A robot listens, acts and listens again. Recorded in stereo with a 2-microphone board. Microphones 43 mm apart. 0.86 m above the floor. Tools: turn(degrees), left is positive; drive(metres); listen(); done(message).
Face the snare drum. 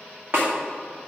turn(degrees=-60)
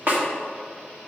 turn(degrees=-50)
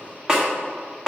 turn(degrees=-15)
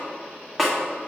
done("Facing the snare drum, 1 to 2 m away.")